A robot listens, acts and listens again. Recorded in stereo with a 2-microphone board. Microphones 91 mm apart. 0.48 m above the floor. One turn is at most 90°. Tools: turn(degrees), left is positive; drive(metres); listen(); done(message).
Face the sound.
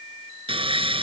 turn(degrees=-90)
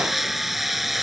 done("Found it: sawing, straight ahead.")